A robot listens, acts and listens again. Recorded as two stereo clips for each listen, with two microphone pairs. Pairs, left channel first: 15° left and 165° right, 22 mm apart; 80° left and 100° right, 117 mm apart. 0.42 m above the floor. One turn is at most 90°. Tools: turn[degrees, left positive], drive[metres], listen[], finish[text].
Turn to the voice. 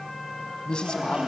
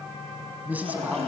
Thought: The man speaking: 20° right.
Action: turn[-20]
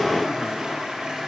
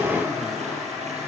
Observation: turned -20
Action: listen[]
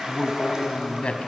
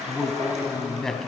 Action: finish[Found it: a man speaking, straight ahead.]